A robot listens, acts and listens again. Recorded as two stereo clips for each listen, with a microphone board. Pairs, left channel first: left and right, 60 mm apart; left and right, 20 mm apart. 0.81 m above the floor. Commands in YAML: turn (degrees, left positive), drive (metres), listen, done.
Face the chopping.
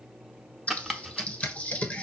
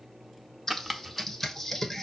turn: -30
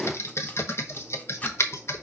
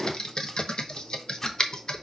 listen: true
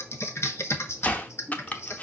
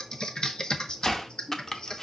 turn: 25
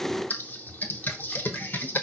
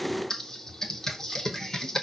listen: true
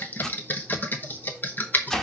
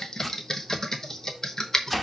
done: "Found it: chopping, straight ahead."